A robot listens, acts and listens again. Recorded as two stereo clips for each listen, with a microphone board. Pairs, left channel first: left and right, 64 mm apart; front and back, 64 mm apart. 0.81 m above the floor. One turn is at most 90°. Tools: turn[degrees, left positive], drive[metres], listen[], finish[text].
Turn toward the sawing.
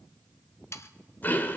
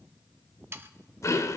Thought: The sawing: 130° left.
Action: turn[90]
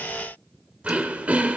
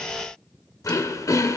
Thought: Nothing new. It was at 40° left.
Action: turn[40]
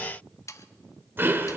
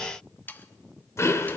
Thought: The sawing is now 60° left.
Action: turn[60]
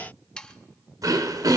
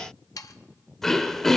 Thought: The sawing is now 15° left.
Action: turn[15]
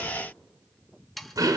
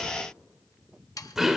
Action: finish[Facing the sawing.]